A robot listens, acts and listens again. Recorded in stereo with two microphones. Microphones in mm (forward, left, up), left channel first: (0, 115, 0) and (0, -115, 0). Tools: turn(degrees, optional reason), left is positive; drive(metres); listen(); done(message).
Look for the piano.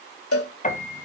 turn(degrees=35, reason="The piano: about 35° left or 145° left.")
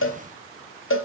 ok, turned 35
listen()
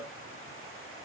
listen()
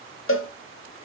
done("I heard a piano, but can't make it out now. It was about straight ahead or 110° left.")